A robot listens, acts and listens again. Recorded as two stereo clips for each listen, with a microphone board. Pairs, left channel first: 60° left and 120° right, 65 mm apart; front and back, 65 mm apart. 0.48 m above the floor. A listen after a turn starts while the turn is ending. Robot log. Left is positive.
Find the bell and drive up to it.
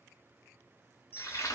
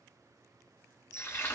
note: The bell: 10° left.
cmd yaw +10
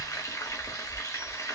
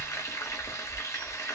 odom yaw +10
cmd idle
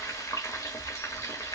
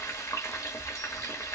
cmd idle
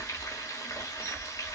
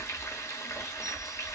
end: Facing where the bell came from. I can't hear it now. I did not reach it.